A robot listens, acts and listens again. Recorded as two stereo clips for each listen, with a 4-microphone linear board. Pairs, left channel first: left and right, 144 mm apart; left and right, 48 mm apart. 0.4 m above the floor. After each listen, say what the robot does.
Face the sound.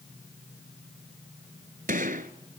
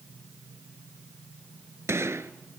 Turn 70° right.
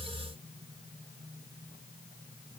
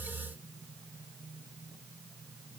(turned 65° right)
Keep listening.
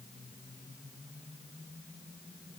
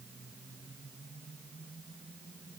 I heard a gunshot, but can't make it out now. It was about 5° right or 45° right.